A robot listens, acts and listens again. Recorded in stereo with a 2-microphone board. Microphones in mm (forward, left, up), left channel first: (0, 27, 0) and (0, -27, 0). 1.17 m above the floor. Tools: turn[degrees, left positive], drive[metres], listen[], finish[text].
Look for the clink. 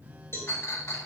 Thought: The clink: about 60° left or 120° left.
Action: turn[60]
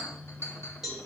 Thought: So it is at 60° left.
Action: turn[60]
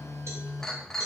Action: finish[Found it: a clink, straight ahead.]